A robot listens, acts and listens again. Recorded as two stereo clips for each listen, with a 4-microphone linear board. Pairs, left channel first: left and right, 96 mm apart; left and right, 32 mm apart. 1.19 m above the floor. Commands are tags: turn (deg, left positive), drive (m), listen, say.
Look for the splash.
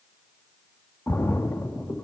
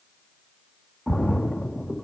<turn deg="25"/>
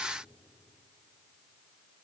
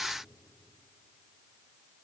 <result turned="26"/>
<listen/>
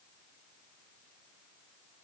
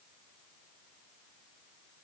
<say>I heard a splash, but can't make it out now. It was about straight ahead or 125° left.</say>